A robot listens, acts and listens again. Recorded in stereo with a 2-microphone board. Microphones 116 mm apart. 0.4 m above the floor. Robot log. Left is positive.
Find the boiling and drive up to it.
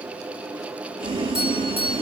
note: The boiling: about 45° right or 135° right.
cmd yaw -45
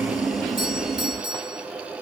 cmd fwd 1.0
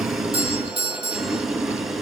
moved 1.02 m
cmd fwd 1.0
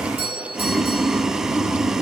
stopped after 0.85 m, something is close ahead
end: Arrived at the boiling, straight ahead.